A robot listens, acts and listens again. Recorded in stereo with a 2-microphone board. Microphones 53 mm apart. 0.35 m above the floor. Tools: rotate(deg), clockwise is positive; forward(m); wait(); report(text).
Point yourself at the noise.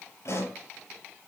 rotate(-65)
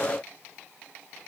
wait()
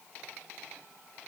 report("I heard a pop, but can't make it out now. It was about straight ahead or 50° left.")